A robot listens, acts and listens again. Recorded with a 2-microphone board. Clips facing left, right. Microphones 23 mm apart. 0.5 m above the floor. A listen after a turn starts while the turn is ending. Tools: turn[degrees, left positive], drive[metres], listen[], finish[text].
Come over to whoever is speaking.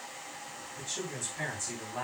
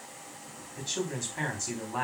Thought: The man speaking: about 35° right or 145° right.
Action: turn[-35]
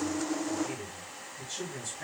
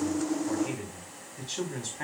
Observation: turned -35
Thought: So it is at 105° right.
Action: turn[-105]
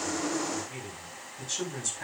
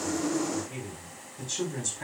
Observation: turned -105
Action: drive[1.0]
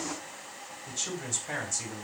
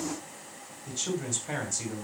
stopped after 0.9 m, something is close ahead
Action: finish[Blocked. The man speaking is further on, straight ahead.]